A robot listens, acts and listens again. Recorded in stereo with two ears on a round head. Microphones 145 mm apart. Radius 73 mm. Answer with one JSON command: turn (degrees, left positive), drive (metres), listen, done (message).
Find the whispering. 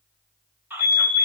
{"turn": -30}
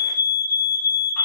{"listen": true}
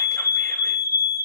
{"listen": true}
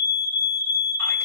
{"done": "I heard whispering, but can't make it out now. It was about 20° left or 140° right."}